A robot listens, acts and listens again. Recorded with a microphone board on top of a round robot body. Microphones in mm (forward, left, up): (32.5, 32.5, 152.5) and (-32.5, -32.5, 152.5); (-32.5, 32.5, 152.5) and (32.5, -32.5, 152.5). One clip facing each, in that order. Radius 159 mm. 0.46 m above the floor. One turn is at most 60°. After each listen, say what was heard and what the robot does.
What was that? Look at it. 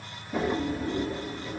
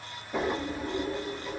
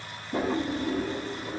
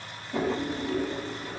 The drawer: 135° left. Turn 60° left.
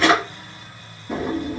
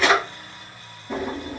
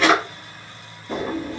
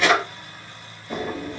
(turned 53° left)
The drawer is now 85° left. Turn 60° left.
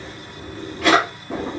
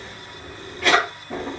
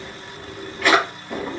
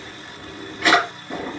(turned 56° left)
The drawer is now 30° left. Turn 30° left.
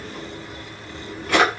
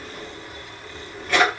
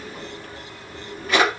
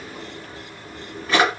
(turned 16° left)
The drawer is now 15° left. Turn 15° left.
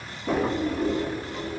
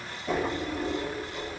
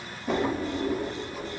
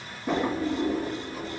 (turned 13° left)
Facing the drawer.